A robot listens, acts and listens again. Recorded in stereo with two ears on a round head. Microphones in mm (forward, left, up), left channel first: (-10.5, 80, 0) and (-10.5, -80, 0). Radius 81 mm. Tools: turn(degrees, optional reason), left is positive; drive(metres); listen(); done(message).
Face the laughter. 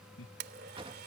turn(degrees=90)
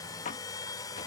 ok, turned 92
listen()
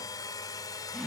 done("Found it: laughter, straight ahead.")